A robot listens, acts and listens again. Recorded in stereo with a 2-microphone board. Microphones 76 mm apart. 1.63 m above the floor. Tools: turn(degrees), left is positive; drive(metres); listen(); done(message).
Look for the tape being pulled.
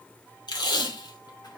turn(degrees=70)
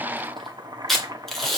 done("Facing the tape being pulled, 2 to 4 m away.")